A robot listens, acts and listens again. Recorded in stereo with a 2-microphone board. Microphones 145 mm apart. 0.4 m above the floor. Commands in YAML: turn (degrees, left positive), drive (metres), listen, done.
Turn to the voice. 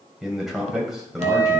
turn: -30
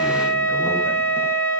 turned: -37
listen: true
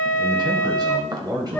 turn: -140
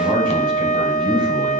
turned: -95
turn: -45
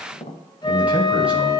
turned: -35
turn: -10
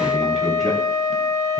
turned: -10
listen: true
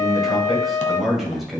done: "Facing the man speaking."